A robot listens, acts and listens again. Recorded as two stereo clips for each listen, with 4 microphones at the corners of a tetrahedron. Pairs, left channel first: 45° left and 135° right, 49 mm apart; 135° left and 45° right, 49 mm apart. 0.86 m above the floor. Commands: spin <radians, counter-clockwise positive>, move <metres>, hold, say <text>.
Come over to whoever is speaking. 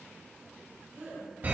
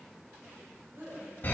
spin -1.40
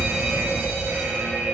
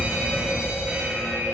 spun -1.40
hold
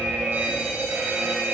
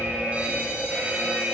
hold
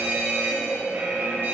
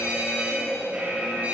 say Facing where the woman speaking came from. I can't hear it now. I did not reach it.